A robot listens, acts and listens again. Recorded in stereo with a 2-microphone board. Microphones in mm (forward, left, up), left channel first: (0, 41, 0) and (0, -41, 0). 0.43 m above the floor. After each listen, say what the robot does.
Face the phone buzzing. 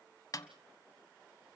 Keep listening.
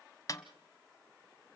Keep listening.
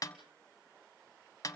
I can't make out a phone buzzing, only a snare drum.